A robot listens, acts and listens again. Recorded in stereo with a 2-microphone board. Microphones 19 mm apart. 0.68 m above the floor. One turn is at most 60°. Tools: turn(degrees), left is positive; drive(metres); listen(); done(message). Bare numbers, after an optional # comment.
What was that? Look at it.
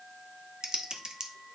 # The typing on a keyboard: about 40° right or 140° right.
turn(-40)
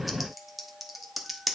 # So it is at 10° right.
turn(-10)
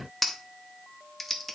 done("Facing the typing on a keyboard.")